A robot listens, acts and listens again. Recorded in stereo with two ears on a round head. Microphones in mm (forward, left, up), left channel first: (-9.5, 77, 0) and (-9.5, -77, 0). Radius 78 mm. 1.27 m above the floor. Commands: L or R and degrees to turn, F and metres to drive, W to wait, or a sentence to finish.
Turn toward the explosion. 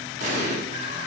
R45
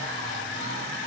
W
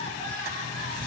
I heard an explosion, but can't make it out now. It was about straight ahead or 90° right.